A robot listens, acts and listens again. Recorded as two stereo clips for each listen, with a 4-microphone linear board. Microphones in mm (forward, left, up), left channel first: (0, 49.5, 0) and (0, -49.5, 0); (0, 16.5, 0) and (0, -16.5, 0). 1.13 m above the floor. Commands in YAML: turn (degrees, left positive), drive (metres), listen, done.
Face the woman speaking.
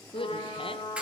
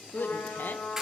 turn: 65
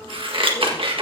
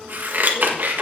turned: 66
listen: true
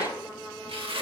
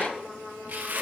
listen: true
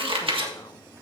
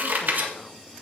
done: "I heard a woman speaking, but can't make it out now. It was about straight ahead or 45° left."